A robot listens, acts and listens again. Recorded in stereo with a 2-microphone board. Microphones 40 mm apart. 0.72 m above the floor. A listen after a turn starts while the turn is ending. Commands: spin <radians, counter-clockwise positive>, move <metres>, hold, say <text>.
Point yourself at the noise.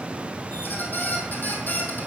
spin 0.87
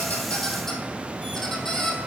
spin 0.26
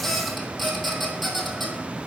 say Found it: a squeak, straight ahead, 1 to 2 m away.